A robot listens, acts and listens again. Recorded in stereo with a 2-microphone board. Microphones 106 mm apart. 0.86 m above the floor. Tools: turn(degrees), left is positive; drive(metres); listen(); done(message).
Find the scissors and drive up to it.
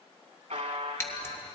turn(degrees=20)
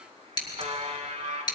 turn(degrees=135)
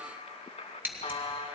turn(degrees=-20)
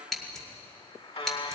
drive(metres=1.0)
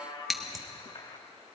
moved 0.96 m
drive(metres=1.0)
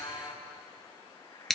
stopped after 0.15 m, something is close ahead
done("Arrived at the scissors, straight ahead.")